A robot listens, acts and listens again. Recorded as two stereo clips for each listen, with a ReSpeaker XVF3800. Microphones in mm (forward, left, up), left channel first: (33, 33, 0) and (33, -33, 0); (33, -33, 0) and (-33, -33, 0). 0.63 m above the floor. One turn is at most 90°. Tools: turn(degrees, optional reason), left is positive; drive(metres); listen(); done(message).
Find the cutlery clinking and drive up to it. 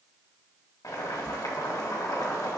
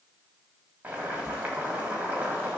listen()
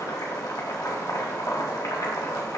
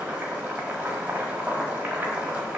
listen()
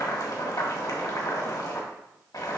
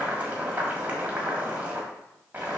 done("I can't make out cutlery clinking, only boiling.")